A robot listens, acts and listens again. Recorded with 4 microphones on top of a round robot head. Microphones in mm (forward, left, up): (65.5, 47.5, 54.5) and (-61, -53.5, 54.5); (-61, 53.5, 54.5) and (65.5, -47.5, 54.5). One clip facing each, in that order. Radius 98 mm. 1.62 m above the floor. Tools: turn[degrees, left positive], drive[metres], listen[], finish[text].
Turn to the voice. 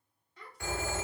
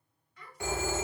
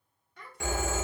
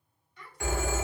Thought: The child speaking: 100° left.
Action: turn[100]
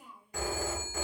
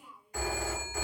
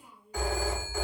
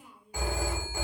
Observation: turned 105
Action: finish[Found it: a child speaking, straight ahead.]